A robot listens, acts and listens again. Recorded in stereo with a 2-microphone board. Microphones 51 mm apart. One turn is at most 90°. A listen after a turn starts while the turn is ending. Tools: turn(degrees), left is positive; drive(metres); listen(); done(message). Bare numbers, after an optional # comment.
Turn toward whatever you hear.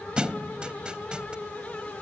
# The thud: about 15° right or 165° right.
turn(-15)
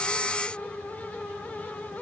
listen()
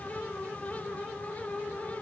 done("I heard a thud, but can't make it out now. It was about straight ahead or 150° right.")